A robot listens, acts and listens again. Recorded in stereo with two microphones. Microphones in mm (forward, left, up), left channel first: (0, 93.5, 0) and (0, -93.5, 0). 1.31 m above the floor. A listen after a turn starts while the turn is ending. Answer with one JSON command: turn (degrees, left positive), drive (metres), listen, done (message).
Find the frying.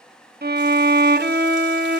{"listen": true}
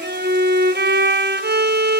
{"listen": true}
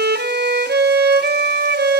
{"done": "I can't make out frying, only a violin."}